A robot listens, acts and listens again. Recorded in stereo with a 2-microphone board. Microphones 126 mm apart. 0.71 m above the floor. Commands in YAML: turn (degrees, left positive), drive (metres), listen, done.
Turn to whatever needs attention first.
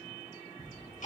listen: true
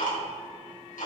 listen: true
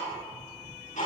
done: "I can't make out anything urgent, only ticking."